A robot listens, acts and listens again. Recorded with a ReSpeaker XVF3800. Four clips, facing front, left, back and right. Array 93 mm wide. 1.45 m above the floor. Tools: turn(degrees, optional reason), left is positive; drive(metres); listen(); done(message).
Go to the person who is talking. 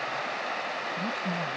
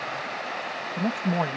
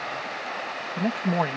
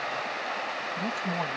turn(degrees=155, reason="The man speaking: 155° left.")
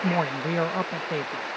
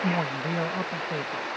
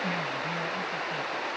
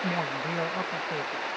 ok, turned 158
drive(metres=1.0)
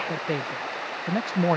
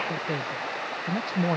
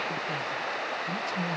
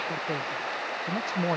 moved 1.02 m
turn(degrees=-10, reason="The man speaking is now 10° right.")
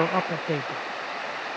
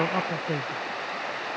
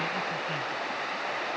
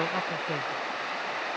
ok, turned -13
drive(metres=1.0)
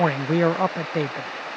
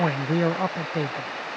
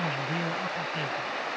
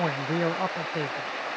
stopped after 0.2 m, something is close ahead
done("I am next to the man speaking.")